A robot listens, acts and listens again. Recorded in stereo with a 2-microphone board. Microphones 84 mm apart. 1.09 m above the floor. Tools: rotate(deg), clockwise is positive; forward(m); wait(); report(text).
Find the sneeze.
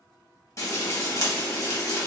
wait()
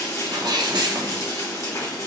rotate(60)
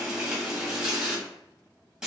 wait()
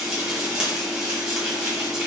report("I heard a sneeze, but can't make it out now. It was about straight ahead or 60° right.")